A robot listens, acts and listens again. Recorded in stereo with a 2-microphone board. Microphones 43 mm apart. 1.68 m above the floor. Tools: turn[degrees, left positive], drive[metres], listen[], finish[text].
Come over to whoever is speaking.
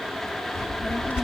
Thought: The child speaking: about 75° left or 105° left.
Action: turn[75]
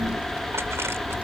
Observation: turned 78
Thought: So it is at 15° left.
Action: turn[15]
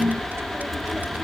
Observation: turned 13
Action: drive[1.0]
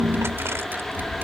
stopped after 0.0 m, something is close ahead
Action: finish[Blocked. The child speaking is further on, straight ahead.]